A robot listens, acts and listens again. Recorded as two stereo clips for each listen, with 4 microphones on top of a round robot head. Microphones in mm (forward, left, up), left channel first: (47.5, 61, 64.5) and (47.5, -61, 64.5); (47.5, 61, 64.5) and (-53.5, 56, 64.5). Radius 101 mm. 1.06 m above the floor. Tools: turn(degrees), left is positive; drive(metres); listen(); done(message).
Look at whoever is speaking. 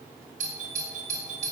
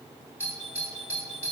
listen()
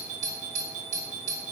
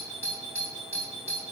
listen()
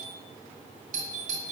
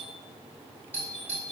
done("I can't make out anyone speaking to turn to.")